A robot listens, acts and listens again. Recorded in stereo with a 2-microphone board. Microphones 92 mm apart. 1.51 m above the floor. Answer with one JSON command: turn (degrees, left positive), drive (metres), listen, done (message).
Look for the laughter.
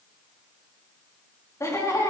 {"turn": 35}
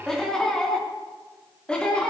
{"turn": 10}
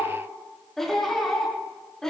{"done": "Facing the laughter, over 4 m away."}